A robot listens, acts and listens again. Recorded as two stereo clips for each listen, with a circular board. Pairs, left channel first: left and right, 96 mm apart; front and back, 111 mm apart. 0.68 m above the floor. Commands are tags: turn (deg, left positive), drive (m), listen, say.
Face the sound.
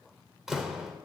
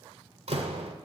<turn deg="-175"/>
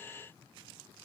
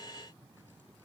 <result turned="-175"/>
<say>Facing where the door slam came from. I can't hear it now.</say>